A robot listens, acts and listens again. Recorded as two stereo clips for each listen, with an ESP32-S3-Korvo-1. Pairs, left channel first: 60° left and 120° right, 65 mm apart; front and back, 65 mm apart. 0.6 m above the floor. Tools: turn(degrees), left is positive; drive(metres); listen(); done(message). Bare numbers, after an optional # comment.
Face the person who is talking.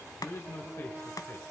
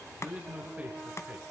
# The man speaking: 110° left.
turn(110)
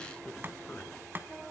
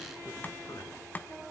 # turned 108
listen()
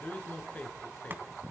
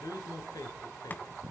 done("Found it: a man speaking, straight ahead, over 4 m away.")